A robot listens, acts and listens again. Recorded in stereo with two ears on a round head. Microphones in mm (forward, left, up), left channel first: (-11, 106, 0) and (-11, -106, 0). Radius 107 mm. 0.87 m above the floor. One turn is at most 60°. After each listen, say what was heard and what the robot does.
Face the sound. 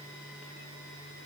Keep listening.
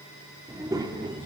The child speaking: about 20° right or 160° right. Turn 20° right.
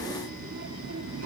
So it is at 115° right. Turn 60° right.
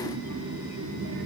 The child speaking is now 55° right. Turn 55° right.
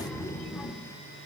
The child speaking is now 10° left. Turn 10° left.
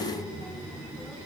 Facing the child speaking, 2 to 4 m away.